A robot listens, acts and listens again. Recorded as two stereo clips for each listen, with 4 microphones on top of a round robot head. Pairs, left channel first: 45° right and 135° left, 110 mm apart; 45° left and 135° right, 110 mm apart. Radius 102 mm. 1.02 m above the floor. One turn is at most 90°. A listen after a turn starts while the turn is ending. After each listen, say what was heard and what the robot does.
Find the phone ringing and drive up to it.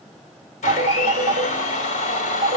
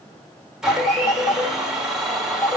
The phone ringing: 105° left. Turn 90° left.
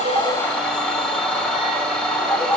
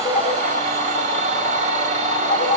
The phone ringing is now 25° left. Turn 25° left.
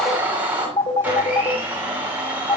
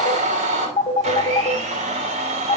Drive 1.0 m forward.
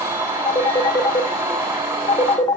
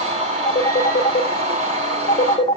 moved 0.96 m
The phone ringing is now 10° left. Turn 10° left.
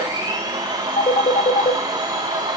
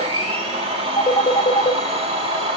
Drive 1.0 m forward.
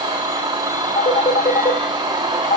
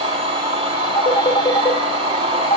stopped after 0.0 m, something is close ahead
Arrived at the phone ringing, straight ahead.